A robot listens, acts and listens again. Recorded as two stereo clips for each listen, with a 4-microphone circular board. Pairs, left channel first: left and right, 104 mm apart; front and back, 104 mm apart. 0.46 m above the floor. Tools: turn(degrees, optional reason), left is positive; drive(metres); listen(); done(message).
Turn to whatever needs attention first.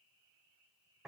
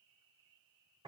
listen()
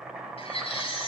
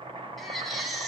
turn(degrees=90, reason="The baby crying: 90° left.")
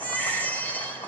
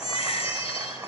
turn(degrees=15, reason="The baby crying is now 15° left.")
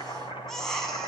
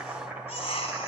done("Facing the baby crying.")